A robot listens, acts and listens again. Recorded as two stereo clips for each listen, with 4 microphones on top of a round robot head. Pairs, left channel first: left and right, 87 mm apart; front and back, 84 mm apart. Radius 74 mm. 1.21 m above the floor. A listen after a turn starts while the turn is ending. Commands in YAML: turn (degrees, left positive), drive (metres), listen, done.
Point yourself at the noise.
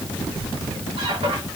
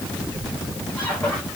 turn: -80
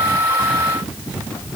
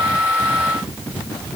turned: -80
listen: true
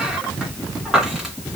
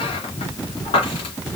turn: -10
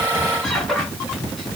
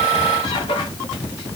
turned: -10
done: "Facing the squeak."